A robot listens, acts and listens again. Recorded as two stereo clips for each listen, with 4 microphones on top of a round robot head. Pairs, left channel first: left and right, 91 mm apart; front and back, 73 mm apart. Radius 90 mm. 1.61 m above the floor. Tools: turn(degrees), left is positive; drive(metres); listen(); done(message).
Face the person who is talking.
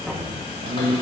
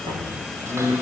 turn(degrees=-95)
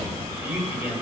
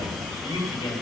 turn(degrees=-20)
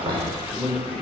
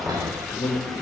done("Facing the man speaking.")